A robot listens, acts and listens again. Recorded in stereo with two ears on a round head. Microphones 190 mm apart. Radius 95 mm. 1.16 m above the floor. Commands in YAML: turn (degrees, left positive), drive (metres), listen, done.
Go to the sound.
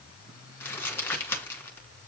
turn: 30
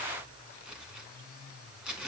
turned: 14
drive: 1.0
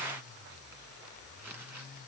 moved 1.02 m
listen: true
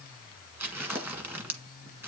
turn: -10
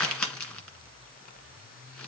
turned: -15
drive: 1.0
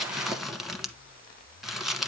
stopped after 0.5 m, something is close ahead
done: "Arrived at the crumpling, straight ahead."